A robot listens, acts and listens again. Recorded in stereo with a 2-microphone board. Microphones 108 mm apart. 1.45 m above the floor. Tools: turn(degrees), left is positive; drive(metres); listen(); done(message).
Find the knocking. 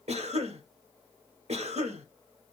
listen()
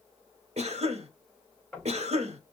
turn(degrees=30)
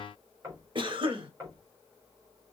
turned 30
turn(degrees=-30)
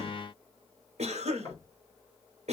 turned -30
turn(degrees=20)
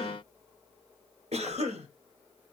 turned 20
listen()
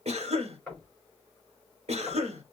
done("Facing the knocking.")